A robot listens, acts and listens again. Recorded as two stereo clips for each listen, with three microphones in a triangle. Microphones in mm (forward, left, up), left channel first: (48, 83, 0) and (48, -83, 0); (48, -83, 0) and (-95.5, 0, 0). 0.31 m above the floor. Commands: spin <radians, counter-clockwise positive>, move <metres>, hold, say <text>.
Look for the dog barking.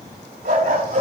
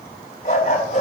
spin -1.22
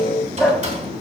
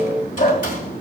say Facing the dog barking.